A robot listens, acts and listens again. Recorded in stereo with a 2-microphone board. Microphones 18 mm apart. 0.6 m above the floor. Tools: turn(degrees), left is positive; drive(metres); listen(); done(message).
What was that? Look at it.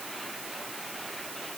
listen()
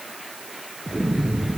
turn(degrees=-60)
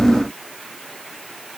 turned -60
listen()
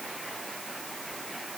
done("I heard an explosion, but can't make it out now. It was about straight ahead or 60° right.")